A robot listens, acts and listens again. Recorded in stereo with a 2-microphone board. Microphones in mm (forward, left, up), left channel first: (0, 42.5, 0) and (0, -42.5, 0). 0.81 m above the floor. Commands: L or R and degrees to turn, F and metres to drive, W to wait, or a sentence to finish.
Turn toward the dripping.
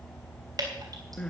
R50
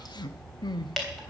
Found it: dripping, straight ahead.